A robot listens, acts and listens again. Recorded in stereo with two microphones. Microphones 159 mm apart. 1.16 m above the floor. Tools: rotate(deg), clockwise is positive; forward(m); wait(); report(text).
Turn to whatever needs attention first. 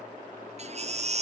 rotate(45)
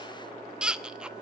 report("Facing the baby crying, under 1 m away.")